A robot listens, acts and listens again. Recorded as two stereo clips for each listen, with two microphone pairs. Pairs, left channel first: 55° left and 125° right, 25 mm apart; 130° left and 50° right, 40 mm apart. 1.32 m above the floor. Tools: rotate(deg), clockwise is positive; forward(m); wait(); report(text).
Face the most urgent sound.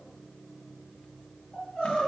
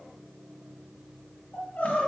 rotate(-120)
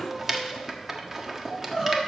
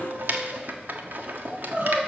rotate(10)
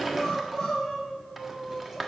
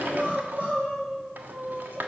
report("Found it: crying, straight ahead.")